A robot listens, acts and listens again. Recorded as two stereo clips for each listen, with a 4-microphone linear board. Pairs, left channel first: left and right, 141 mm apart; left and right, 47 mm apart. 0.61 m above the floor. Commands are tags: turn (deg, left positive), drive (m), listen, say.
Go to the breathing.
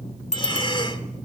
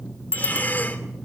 <turn deg="35"/>
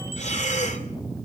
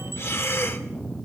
<turn deg="105"/>
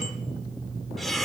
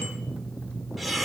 <drive m="1.0"/>
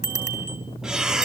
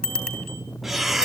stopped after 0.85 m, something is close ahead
<say>I am next to the breathing.</say>